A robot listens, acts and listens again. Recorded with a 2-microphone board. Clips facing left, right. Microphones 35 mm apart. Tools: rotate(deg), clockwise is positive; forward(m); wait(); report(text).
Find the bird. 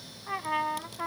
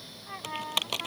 wait()
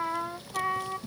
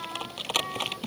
wait()
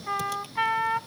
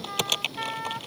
report("I can't make out a bird, only typing on a keyboard and a trumpet.")